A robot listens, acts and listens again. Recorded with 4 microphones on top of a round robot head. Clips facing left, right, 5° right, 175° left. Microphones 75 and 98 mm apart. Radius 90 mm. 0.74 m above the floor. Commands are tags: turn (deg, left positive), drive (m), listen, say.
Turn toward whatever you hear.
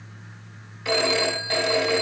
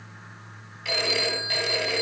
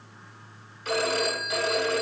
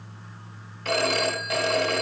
<turn deg="145"/>
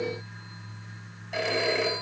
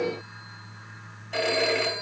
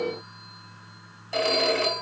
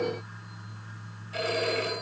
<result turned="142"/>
<say>Found it: a phone ringing, straight ahead, over 4 m away.</say>